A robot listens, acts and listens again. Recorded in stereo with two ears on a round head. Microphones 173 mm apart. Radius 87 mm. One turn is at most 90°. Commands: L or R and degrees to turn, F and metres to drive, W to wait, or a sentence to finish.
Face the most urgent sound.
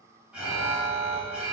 R30
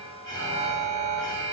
L25
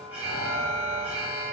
Facing the alarm.